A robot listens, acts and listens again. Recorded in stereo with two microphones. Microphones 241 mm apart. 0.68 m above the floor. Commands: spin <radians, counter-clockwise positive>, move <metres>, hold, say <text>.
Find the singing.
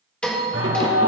spin -1.22
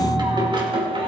spin -0.44
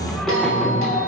say Facing the singing.